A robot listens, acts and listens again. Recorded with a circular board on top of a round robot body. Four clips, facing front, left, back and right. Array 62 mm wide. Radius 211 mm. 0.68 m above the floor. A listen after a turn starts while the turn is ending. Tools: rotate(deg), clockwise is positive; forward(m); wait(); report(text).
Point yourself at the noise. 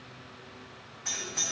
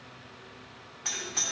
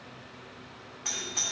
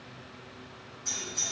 rotate(-115)
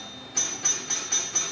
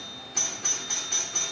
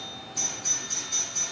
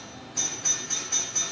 rotate(-30)
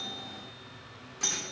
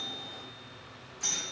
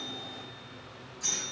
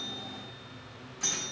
rotate(15)
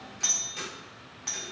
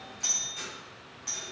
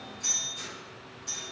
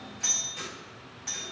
report("Facing the doorbell.")